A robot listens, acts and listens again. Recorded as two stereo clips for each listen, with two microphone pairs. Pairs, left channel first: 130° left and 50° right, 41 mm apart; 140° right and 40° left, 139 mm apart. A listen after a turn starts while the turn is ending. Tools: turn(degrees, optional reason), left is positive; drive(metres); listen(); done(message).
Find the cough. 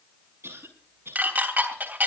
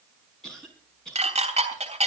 turn(degrees=-55, reason="The cough: 55° right.")
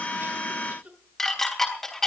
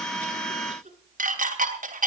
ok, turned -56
done("Facing the cough.")